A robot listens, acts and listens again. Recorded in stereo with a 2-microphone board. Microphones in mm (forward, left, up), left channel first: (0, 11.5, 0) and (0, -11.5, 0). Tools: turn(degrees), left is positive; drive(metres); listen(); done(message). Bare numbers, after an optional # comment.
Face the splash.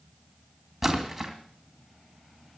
turn(-30)
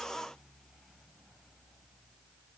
listen()
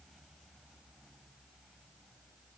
done("I heard a splash, but can't make it out now. It was about 25° left or 145° right.")